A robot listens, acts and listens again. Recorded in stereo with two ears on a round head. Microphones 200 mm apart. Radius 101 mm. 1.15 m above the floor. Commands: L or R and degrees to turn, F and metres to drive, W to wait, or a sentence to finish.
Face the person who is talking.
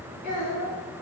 L40
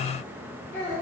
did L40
L15
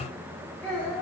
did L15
L10
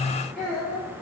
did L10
L10
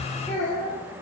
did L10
L10
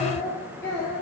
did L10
L15
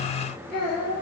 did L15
L10
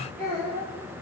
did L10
Facing the child speaking.